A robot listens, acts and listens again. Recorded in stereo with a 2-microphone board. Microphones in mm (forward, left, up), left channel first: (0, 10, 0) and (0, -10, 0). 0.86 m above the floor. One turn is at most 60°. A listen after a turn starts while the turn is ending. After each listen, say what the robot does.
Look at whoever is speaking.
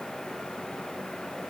Keep listening.
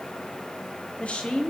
Turn 60° left.
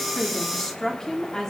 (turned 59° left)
Turn 30° left.
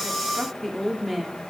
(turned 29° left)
Facing the woman speaking.